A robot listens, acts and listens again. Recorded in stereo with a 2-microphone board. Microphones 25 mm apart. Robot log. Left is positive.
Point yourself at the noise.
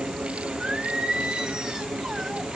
note: The singing: about 30° right or 150° right.
cmd yaw -30
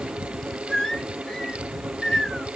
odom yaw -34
note: So it is at 35° left.
cmd yaw +35
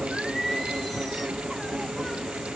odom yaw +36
end: Facing the singing.